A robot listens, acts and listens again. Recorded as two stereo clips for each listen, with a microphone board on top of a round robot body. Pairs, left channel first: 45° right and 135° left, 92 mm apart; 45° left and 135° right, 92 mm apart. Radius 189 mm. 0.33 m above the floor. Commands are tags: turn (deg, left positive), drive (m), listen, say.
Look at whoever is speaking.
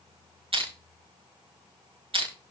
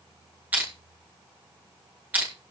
<listen/>
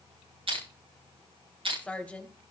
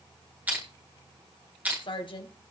<turn deg="30"/>
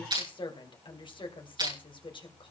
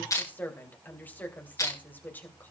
<turn deg="-25"/>
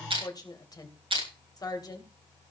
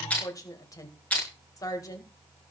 <say>Facing the woman speaking, 2 to 4 m away.</say>